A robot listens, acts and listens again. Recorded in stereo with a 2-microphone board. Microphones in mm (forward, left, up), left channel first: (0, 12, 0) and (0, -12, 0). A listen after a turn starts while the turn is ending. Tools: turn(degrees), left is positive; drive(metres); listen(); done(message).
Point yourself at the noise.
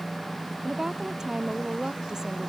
turn(degrees=-25)
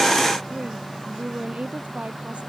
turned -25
turn(degrees=-125)
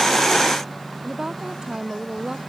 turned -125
turn(degrees=-30)
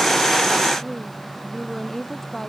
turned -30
turn(degrees=15)
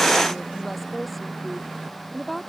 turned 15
done("Facing the woman speaking.")